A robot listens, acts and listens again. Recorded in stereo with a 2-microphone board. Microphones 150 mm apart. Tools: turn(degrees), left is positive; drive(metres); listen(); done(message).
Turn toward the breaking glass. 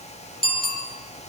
listen()
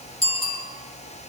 listen()
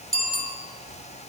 done("I can't make out breaking glass, only a bicycle bell.")